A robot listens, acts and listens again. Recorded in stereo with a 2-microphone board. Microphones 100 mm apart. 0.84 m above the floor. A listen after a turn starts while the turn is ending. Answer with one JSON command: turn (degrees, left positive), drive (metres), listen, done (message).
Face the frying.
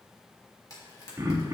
{"turn": 35}
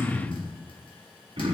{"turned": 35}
{"listen": true}
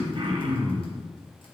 {"listen": true}
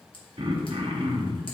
{"done": "I heard frying, but can't make it out now. It was about straight ahead or 110° left."}